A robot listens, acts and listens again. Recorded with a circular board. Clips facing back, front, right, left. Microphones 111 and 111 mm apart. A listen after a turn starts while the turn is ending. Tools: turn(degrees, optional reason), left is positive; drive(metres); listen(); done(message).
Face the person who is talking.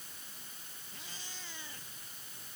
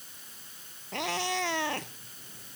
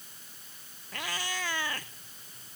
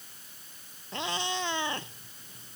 listen()
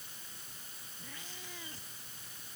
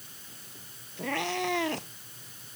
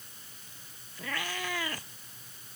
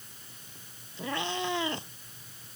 listen()
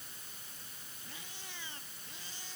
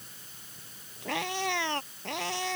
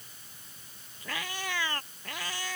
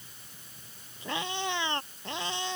done("I can't make out anyone speaking, only a cat meowing.")